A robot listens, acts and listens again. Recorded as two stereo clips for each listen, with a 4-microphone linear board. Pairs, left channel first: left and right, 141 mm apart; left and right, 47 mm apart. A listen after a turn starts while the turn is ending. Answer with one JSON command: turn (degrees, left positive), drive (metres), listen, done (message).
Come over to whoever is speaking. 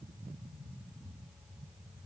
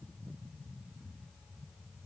{"listen": true}
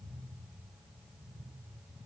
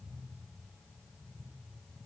{"listen": true}
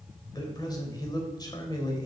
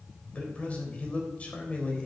{"turn": 30}
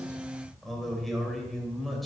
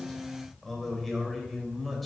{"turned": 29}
{"drive": 1.0}
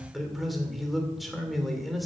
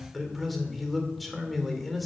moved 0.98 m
{"drive": 1.0}
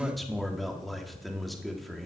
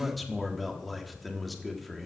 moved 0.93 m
{"drive": 1.0}
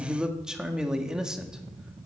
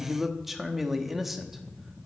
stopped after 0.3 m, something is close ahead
{"done": "Arrived at the man speaking, straight ahead."}